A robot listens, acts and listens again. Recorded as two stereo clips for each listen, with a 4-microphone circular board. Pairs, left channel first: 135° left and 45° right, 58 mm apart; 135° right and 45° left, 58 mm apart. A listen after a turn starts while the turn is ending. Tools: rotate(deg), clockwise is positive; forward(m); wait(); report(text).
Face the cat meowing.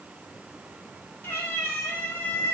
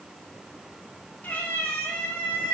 rotate(-170)
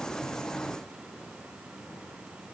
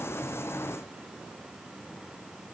wait()
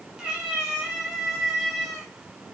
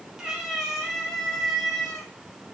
rotate(85)
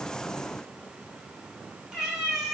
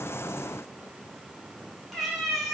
rotate(50)
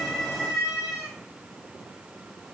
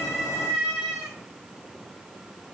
report("Found it: a cat meowing, straight ahead.")